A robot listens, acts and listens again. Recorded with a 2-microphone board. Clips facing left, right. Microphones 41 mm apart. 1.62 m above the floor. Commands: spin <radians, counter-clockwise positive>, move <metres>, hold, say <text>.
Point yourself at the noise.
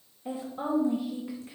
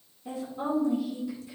spin 0.61
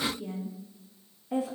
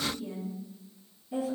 spin 1.83
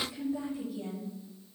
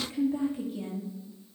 spin -0.87
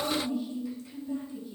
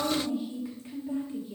spin -0.61
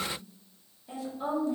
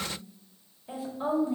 spin -0.26
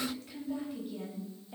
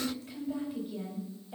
say Facing the woman speaking.